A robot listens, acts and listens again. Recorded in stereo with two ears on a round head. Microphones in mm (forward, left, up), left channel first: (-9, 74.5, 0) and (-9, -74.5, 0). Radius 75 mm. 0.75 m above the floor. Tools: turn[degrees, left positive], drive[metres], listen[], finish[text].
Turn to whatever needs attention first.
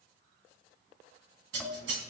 Action: listen[]
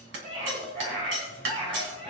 Thought: The scream: about 40° right or 140° right.
Action: turn[-40]
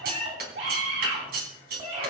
Thought: So it is at 100° right.
Action: turn[-100]
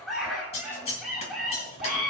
Action: finish[Found it: a scream, straight ahead, over 4 m away.]